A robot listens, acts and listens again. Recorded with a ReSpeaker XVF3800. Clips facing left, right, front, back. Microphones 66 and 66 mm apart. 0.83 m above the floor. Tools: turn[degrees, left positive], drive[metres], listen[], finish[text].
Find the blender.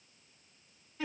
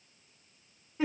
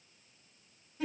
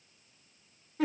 Action: listen[]
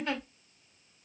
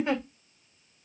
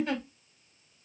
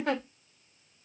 Action: listen[]
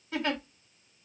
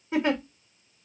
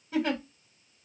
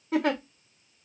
Action: finish[I can't make out a blender to turn to.]